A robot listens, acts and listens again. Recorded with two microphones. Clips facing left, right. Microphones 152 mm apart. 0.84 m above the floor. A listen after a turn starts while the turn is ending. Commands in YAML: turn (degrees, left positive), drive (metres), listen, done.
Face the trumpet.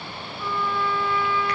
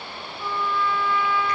turn: -25
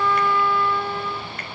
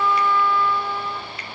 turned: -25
done: "Facing the trumpet, 2 to 4 m away."